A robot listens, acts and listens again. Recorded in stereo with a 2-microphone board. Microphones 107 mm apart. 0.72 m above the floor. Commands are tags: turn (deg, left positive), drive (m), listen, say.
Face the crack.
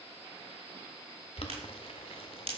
<turn deg="-60"/>
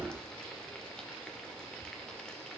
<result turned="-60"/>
<listen/>
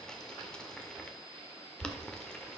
<say>I heard a crack, but can't make it out now. It was about straight ahead or 60° right.</say>